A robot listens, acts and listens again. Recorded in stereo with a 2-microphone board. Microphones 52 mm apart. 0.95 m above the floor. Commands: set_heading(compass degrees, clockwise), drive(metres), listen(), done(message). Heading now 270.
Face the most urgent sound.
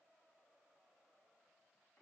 listen()
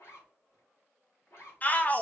set_heading(240)
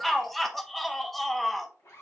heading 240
done("Found it: a shout, straight ahead, under 1 m away.")